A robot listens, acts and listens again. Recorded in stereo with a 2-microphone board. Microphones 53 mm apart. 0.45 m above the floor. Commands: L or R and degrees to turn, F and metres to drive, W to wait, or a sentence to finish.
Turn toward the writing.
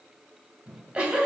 W
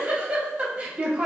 W
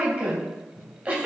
I can't make out writing, only a giggle.